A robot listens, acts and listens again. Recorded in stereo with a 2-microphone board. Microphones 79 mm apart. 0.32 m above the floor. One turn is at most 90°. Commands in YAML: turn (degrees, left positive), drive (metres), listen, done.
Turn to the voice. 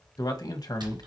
turn: 60
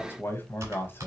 turn: 35
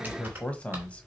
turn: 20
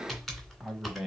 done: "Facing the man speaking, 1 to 2 m away."